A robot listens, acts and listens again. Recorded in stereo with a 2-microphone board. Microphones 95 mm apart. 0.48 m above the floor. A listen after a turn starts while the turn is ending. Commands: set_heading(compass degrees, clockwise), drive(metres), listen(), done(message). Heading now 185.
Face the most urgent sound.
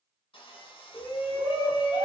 set_heading(135)
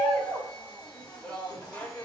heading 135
set_heading(115)
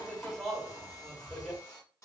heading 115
done("Found it: a shout, straight ahead.")